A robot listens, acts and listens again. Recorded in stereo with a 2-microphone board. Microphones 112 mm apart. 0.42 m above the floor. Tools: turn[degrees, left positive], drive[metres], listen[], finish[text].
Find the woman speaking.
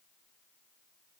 Action: listen[]
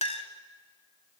Action: listen[]
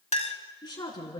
Thought: The woman speaking: about 40° left or 140° left.
Action: turn[40]
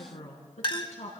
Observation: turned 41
Thought: So it is at 100° left.
Action: turn[100]
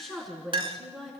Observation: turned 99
Action: finish[Facing the woman speaking, over 4 m away.]